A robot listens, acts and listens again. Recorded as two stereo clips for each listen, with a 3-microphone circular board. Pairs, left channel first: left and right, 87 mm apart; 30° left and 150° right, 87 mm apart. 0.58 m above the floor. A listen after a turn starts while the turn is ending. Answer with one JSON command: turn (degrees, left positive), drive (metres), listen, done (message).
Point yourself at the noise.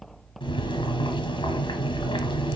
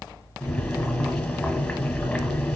{"turn": 115}
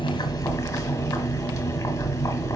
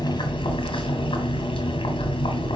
{"turn": 40}
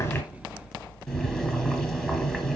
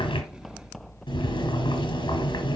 {"done": "Facing the boiling."}